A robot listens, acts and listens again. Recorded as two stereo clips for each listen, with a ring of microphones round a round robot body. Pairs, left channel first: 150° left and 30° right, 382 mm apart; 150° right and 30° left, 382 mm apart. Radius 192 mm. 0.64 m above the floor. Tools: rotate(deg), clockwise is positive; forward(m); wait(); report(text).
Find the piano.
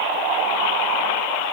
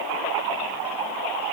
wait()
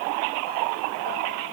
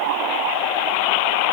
wait()
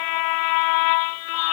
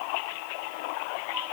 report("I can't make out a piano to turn to.")